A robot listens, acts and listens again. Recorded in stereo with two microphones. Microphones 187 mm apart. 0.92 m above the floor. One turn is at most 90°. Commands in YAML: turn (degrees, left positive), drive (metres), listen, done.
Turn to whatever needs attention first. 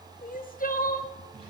turn: 50
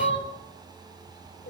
turn: 80
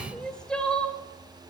done: "Facing the crying."